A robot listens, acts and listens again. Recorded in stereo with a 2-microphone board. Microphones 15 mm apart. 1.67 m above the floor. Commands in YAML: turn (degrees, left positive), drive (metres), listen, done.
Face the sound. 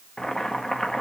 turn: 55
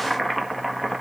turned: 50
turn: 15
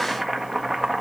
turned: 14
done: "Facing the boiling."